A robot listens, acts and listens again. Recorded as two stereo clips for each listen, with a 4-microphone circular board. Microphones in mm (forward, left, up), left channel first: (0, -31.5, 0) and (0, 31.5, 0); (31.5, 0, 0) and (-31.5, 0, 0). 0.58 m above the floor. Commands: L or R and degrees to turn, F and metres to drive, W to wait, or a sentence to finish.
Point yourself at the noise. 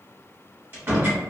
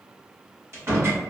L140
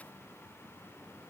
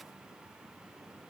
I heard a door slam from this way, but can't make it out now.